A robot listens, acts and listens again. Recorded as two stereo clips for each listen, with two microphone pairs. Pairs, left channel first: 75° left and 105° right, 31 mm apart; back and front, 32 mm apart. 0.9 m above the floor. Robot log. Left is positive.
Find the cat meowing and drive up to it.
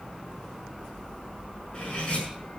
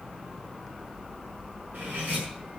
cmd idle
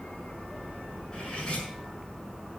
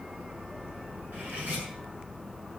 cmd idle
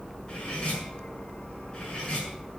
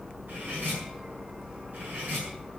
end: I can't make out a cat meowing to turn to.